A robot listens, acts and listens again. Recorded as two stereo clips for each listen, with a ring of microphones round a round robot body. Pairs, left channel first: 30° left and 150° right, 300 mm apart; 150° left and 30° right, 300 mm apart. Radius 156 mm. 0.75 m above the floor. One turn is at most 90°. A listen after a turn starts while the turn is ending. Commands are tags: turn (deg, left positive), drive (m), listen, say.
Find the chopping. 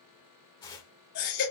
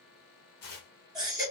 <listen/>
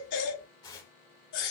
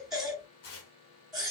<listen/>
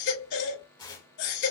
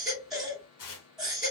<say>I can't make out chopping to turn to.</say>